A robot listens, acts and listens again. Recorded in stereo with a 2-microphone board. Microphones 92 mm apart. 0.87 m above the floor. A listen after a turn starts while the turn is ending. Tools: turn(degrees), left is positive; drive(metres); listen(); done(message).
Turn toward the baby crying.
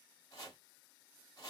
listen()
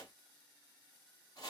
listen()
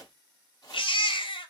turn(degrees=75)
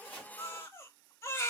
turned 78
turn(degrees=25)
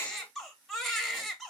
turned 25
done("Facing the baby crying.")